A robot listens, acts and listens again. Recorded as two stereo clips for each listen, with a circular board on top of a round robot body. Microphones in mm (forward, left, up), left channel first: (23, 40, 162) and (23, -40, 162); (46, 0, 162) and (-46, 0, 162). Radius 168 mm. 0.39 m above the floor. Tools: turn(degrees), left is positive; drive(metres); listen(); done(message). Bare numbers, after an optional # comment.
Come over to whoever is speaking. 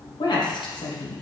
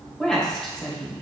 # The woman speaking: 80° left.
turn(80)
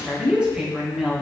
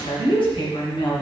# The woman speaking is now 15° right.
turn(-15)
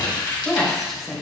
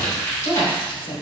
drive(1.0)
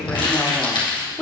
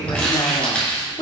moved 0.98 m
drive(1.0)
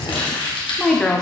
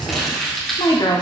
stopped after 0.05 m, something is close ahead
# The woman speaking is now 10° left.
turn(10)
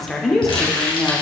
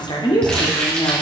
done("Arrived at the woman speaking, straight ahead.")